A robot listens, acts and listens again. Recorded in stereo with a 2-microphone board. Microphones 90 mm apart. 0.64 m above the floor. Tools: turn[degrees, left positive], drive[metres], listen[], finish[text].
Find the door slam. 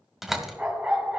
Action: turn[-30]
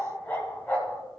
Action: listen[]
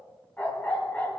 Action: finish[I heard a door slam, but can't make it out now. It was about 25° left or 145° right.]